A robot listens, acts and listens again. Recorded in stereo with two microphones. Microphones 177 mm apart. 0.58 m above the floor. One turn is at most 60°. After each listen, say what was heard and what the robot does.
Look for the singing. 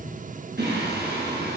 The singing: about 70° right or 110° right. Turn 60° right.
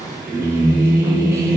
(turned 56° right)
So it is at 15° right. Turn 15° right.
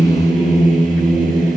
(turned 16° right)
Facing the singing.